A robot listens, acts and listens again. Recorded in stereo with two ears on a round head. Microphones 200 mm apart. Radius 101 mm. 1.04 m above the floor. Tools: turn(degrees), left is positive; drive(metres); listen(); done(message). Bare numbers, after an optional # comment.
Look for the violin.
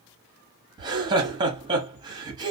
listen()
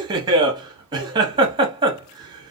listen()
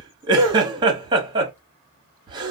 done("I can't make out a violin to turn to.")